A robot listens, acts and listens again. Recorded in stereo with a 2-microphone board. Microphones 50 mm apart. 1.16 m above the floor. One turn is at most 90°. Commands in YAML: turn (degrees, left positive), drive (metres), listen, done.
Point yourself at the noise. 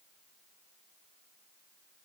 listen: true
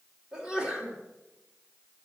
turn: -30
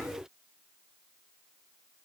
listen: true
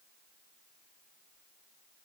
done: "I heard a sneeze, but can't make it out now. It was about 15° left or 135° right."